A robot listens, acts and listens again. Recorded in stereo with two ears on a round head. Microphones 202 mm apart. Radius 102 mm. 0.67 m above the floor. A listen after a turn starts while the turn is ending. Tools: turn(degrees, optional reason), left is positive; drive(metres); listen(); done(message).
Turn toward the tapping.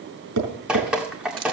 turn(degrees=-90)
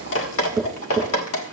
done("Found it: tapping, straight ahead.")